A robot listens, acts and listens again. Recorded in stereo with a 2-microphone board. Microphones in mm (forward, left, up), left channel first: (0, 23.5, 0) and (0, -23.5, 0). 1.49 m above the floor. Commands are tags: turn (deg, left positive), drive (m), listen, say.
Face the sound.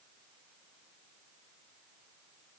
<listen/>
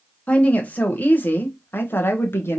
<turn deg="60"/>
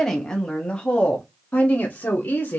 <turn deg="40"/>
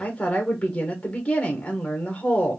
<turn deg="25"/>
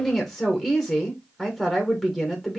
<say>Found it: a woman speaking, straight ahead, 1 to 2 m away.</say>